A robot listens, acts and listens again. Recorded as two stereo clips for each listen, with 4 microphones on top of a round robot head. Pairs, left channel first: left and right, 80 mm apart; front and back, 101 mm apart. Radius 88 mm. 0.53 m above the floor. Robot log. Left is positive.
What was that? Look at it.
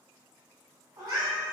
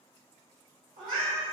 note: The cat meowing: 125° right.
cmd yaw -125
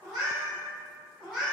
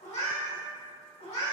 note: The cat meowing is now 10° left.
cmd yaw +10
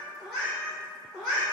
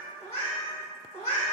note: The cat meowing is now 10° left.
cmd yaw +10
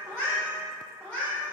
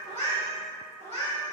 end: Found it: a cat meowing, straight ahead.